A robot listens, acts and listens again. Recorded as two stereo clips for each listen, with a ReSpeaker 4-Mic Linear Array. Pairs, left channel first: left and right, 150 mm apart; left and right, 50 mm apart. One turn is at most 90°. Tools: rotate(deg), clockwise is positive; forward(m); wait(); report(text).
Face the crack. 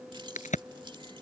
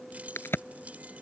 rotate(-55)
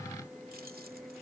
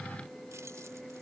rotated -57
wait()
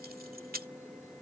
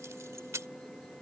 report("I heard a crack, but can't make it out now. It was about straight ahead or 65° left.")